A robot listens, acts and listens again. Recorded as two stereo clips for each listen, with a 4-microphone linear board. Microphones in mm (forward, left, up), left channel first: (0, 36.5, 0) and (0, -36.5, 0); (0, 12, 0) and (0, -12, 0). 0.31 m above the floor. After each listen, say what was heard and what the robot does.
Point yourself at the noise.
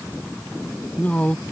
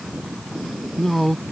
The man speaking: about 20° left or 160° left. Turn 20° left.
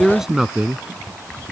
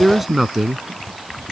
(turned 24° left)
So it is at 10° right. Turn 10° right.
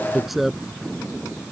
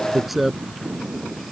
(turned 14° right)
Facing the man speaking.